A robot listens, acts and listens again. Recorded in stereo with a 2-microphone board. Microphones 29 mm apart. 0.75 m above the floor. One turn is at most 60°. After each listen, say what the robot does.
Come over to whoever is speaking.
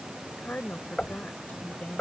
Turn 60° left.
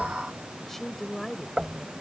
Turn 10° left.
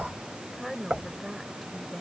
Drive 1.0 m forward.
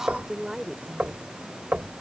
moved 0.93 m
Turn 15° right.
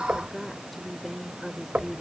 Drive 1.0 m forward.
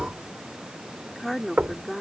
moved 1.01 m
Drive 1.0 m forward.
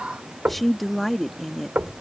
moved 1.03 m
Turn 10° left.
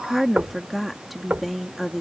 Drive 1.0 m forward.
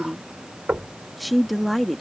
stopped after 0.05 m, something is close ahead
Arrived at the woman speaking, straight ahead.